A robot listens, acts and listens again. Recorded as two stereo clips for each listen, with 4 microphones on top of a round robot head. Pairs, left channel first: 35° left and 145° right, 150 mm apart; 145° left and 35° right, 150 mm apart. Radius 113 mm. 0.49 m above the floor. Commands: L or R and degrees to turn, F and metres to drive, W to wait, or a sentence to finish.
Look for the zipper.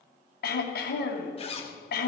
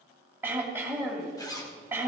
L80
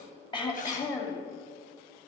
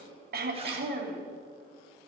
W
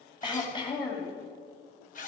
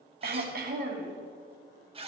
L15
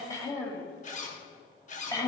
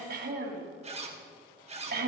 Found it: a zipper, straight ahead, 2 to 4 m away.